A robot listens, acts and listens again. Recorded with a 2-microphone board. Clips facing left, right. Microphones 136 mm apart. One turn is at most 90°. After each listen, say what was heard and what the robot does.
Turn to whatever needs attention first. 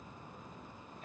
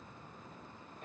Keep listening.
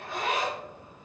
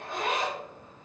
Keep listening.
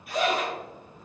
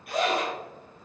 I can't make out anything urgent, only a zipper.